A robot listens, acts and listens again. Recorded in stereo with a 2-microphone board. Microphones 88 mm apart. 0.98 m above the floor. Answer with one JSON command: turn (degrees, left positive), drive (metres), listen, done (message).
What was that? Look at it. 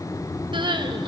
{"turn": -60}
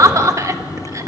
{"turn": -40}
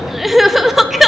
{"done": "Facing the crying, 1 to 2 m away."}